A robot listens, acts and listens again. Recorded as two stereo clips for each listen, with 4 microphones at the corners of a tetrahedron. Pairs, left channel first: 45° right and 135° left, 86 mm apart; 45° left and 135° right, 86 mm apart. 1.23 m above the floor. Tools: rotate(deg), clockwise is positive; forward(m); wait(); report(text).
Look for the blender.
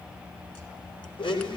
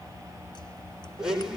rotate(50)
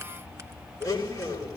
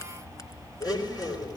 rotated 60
report("Facing the blender, over 4 m away.")